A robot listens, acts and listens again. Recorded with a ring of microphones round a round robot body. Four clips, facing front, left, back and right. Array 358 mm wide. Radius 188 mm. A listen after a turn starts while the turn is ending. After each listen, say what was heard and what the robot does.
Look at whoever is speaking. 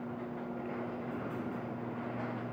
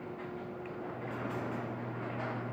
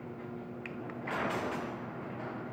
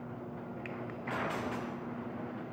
Keep listening.
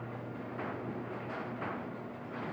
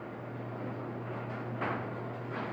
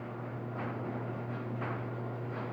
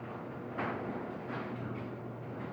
Keep listening.
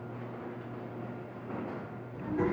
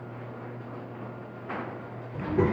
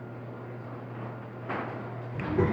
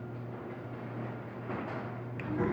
The child speaking: 115° left. Turn 115° left.
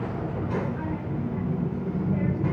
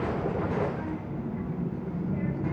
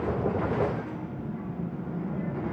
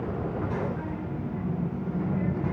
Facing the child speaking.